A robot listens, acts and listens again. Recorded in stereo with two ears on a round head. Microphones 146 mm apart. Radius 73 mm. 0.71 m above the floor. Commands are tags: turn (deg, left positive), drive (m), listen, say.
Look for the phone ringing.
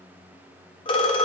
<turn deg="30"/>
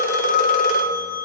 <turn deg="120"/>
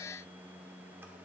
<listen/>
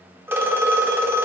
<turn deg="-15"/>
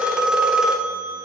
<say>Found it: a phone ringing, straight ahead.</say>